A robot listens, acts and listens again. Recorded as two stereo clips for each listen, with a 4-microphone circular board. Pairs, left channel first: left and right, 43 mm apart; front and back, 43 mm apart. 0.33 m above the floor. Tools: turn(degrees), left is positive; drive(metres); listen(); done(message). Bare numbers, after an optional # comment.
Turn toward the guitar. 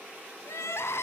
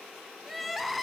listen()
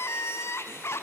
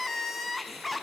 listen()
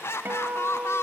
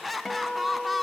# The guitar: 80° right.
turn(-80)
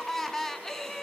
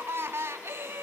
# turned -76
listen()
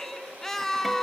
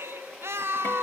listen()
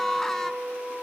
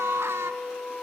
done("Facing the guitar.")